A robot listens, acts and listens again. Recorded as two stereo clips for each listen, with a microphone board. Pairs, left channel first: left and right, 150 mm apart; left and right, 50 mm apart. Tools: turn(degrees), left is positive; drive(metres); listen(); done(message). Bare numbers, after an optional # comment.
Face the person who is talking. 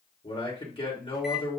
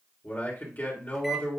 # The man speaking: about 35° left or 145° left.
turn(35)
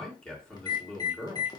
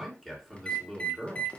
done("Facing the man speaking.")